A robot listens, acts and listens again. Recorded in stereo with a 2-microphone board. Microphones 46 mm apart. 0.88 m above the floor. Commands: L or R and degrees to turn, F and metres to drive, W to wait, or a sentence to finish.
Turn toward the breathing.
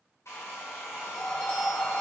L45
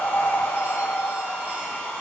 L90
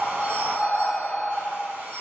Facing the breathing.